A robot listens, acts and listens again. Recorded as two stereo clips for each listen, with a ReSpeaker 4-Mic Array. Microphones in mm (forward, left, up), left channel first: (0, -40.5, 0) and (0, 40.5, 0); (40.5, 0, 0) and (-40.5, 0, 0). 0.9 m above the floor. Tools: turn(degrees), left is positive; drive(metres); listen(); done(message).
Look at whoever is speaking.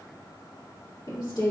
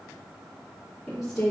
turn(degrees=-85)
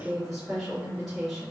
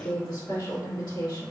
done("Facing the woman speaking.")